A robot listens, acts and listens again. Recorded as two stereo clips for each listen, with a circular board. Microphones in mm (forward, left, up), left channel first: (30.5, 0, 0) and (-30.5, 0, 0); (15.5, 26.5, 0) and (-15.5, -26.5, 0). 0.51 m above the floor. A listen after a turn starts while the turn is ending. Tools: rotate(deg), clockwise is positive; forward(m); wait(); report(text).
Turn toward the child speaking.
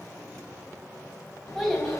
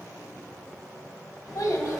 rotate(-85)
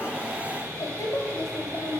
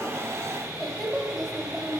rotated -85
rotate(40)
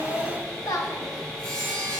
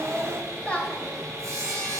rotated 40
rotate(15)
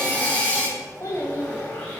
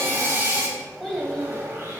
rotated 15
rotate(35)
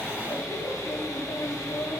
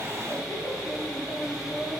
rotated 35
rotate(10)
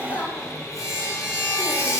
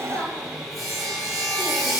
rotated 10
report("Facing the child speaking.")